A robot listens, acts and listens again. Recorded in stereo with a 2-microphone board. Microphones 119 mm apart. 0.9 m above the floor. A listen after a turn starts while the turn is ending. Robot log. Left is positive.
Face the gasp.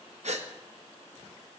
note: The gasp: about 70° right or 110° right.
cmd yaw -70
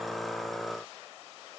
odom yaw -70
cmd idle
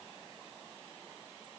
end: I heard a gasp, but can't make it out now. It was about straight ahead or 40° right.